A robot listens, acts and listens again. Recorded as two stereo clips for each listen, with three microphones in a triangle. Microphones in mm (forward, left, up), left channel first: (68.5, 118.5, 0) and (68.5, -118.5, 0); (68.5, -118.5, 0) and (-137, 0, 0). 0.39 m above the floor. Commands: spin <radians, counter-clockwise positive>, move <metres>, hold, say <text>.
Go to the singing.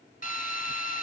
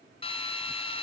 hold
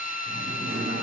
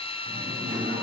spin -2.44
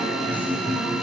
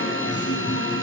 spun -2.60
move 1.0
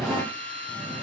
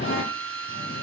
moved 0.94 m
move 1.0
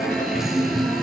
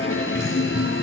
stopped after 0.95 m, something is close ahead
say Arrived at the singing, straight ahead.